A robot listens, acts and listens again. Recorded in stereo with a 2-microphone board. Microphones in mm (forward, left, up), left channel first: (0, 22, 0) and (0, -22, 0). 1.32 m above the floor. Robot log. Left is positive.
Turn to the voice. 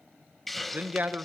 note: The man speaking: about 40° right or 140° right.
cmd yaw -40
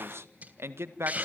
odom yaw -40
note: So it is at 95° right.
cmd yaw -95
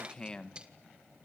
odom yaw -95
note: The man speaking is now 20° left.
cmd yaw +20
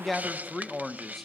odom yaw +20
end: Found it: a man speaking, straight ahead, 1 to 2 m away.